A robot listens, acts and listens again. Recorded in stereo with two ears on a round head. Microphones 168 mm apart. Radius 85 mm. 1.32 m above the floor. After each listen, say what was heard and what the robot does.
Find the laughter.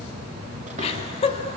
The laughter: about 35° left or 145° left. Turn 35° left.
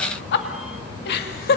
So it is at 125° left. Turn 125° left.
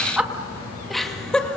Facing the laughter.